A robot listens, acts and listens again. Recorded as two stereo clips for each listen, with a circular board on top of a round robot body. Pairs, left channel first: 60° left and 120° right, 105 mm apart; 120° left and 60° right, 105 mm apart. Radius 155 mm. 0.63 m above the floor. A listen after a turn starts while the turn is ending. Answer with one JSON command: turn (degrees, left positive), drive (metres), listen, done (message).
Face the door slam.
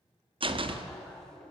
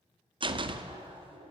{"turn": -95}
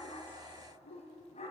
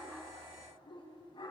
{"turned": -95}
{"done": "I heard a door slam from this way, but can't make it out now."}